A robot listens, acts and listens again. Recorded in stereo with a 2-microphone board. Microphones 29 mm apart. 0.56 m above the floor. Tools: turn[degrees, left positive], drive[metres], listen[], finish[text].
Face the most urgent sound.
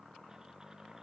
Action: listen[]
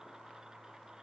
Action: listen[]
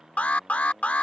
Thought: The alarm: about 55° left or 125° left.
Action: turn[55]
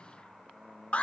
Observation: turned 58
Thought: So it is at 55° left.
Action: turn[55]
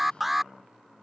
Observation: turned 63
Action: finish[Facing the alarm.]